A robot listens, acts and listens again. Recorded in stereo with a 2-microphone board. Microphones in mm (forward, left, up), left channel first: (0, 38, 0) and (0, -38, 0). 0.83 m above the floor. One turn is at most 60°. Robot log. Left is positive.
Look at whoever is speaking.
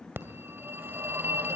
cmd idle
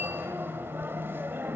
cmd idle
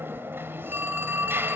end: I can't make out anyone speaking to turn to.